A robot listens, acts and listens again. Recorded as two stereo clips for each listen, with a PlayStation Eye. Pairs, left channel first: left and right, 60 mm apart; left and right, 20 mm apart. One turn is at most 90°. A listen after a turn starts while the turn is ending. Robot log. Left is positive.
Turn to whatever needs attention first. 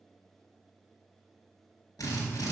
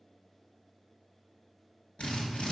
cmd idle
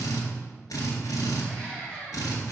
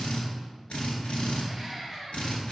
note: The scream: about 20° left or 160° left.
cmd yaw +20
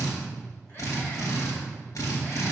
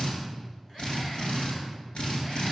cmd idle
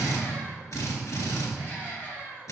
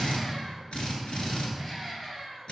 note: So it is at 140° left.
cmd yaw +90
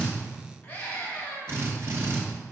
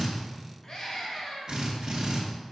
note: The scream is now 25° left.
cmd yaw +25
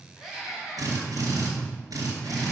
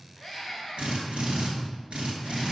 note: The scream is now 10° right.
cmd yaw -10
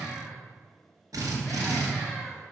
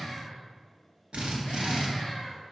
cmd idle
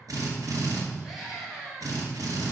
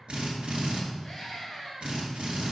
end: Found it: a scream, straight ahead, 2 to 4 m away.